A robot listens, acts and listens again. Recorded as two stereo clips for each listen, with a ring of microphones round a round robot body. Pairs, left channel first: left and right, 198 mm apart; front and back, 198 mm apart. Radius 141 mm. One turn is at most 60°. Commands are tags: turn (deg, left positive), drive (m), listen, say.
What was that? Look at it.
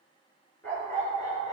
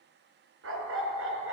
<turn deg="60"/>
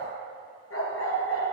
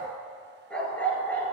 <turn deg="60"/>
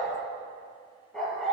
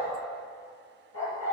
<say>Found it: a dog barking, straight ahead, 2 to 4 m away.</say>